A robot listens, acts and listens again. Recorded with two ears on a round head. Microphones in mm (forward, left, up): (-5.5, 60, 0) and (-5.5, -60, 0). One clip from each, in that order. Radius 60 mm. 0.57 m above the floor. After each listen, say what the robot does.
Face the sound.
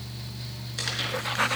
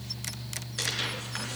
Turn 30° left.
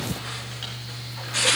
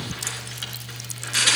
Turn 30° right.
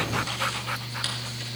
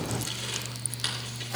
Facing the tearing paper, over 4 m away.